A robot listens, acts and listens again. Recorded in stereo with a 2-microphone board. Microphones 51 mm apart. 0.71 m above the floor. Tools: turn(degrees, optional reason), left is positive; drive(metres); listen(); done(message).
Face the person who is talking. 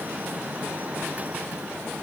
listen()
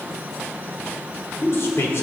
turn(degrees=60, reason="The man speaking: about 60° left or 120° left.")
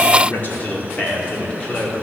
turn(degrees=20, reason="So it is at 20° left.")
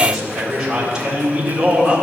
turn(degrees=-10, reason="The man speaking is now 10° right.")
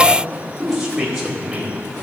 done("Facing the man speaking, 2 to 4 m away.")